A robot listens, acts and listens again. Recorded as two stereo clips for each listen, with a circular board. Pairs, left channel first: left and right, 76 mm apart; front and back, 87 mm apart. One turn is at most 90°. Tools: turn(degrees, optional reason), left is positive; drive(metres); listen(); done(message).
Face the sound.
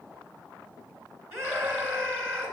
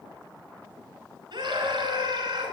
turn(degrees=-90, reason="The scream: 145° right.")
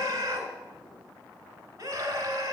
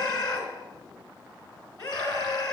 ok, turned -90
turn(degrees=-40, reason="The scream is now 40° right.")
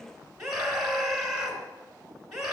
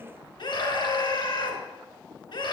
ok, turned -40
done("Found it: a scream, straight ahead, over 4 m away.")